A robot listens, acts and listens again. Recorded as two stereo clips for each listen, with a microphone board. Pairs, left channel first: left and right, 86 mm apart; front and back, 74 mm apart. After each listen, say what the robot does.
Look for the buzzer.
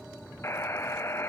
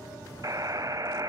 Turn 145° left.
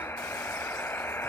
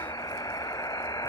Turn 30° left.
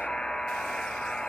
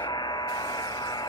Turn 10° left.
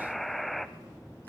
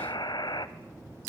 Facing the buzzer, 1 to 2 m away.